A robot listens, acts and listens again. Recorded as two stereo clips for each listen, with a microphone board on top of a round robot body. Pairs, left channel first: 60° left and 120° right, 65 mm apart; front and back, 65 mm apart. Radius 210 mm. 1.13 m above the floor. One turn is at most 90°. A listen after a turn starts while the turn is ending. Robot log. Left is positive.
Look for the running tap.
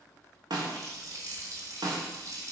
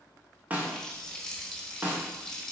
note: The running tap: 80° right.
cmd yaw -80
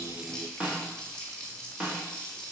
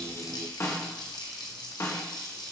note: The running tap is now 15° right.
cmd yaw -15
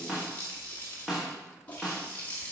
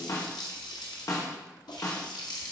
end: Facing the running tap, 1 to 2 m away.